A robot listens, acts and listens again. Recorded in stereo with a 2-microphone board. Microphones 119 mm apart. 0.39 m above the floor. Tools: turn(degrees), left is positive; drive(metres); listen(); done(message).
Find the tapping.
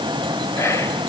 listen()
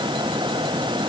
listen()
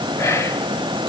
done("I can't make out tapping to turn to.")